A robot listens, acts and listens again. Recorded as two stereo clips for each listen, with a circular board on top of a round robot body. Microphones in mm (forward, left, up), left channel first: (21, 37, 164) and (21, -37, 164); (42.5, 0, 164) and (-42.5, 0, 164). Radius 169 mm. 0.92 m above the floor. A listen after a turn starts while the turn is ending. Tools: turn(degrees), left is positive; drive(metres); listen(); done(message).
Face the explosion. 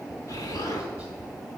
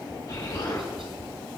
turn(degrees=50)
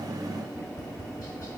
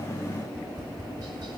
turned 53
done("I heard an explosion from this way, but can't make it out now.")